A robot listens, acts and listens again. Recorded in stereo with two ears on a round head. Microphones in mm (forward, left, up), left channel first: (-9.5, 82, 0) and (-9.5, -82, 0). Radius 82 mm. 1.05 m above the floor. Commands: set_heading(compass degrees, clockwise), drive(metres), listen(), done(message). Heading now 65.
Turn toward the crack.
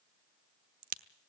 set_heading(115)
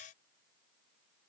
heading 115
listen()
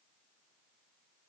done("I heard a crack, but can't make it out now. It was about straight ahead or 80° right.")